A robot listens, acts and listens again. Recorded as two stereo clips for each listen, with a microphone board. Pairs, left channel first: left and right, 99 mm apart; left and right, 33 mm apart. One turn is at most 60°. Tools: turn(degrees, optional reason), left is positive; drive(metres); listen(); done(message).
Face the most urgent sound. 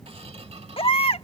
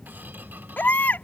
turn(degrees=60, reason="The baby crying: about 65° left or 115° left.")
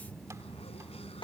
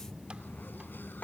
turn(degrees=50, reason="So it is at 50° left.")
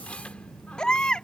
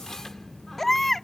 turn(degrees=10, reason="The baby crying is now 10° left.")
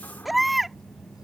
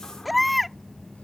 done("Found it: a baby crying, straight ahead.")